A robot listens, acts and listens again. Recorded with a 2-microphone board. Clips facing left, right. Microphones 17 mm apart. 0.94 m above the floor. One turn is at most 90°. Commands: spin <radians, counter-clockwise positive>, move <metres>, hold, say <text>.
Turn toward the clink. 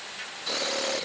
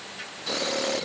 hold
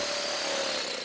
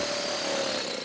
hold
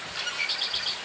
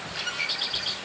say I can't make out a clink to turn to.